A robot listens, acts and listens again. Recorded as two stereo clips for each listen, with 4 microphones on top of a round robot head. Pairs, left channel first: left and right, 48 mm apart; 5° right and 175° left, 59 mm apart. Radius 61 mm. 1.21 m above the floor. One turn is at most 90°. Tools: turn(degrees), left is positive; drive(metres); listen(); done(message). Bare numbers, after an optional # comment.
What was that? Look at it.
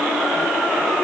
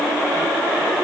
listen()
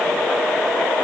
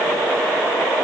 listen()
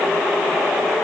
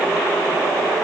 done("I can't make out anything to turn to.")